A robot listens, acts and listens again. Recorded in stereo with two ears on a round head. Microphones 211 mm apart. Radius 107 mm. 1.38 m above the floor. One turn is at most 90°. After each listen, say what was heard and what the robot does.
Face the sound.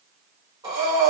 The breathing: about 15° right or 165° right. Turn 15° right.
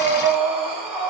Found it: breathing, straight ahead.